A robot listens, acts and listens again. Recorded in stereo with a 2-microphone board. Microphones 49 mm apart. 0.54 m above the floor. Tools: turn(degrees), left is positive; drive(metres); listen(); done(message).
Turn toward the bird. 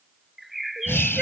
turn(degrees=30)
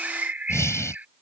turn(degrees=-35)
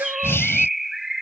done("Facing the bird.")